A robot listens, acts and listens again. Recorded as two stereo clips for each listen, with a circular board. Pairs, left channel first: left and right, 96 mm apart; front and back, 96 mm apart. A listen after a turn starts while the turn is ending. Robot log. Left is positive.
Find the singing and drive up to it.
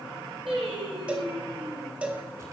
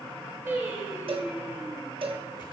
note: The singing: 115° right.
cmd yaw -115
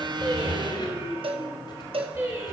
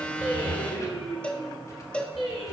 note: The singing is now 30° right.
cmd yaw -30
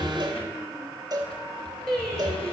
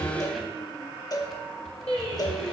cmd fwd 1.0
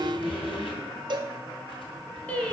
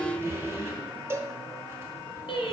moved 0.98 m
note: The singing is now 15° left.
cmd yaw +15
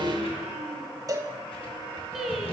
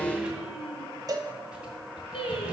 cmd fwd 1.0
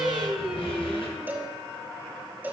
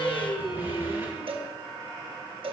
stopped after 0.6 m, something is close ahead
end: Arrived at the singing, straight ahead.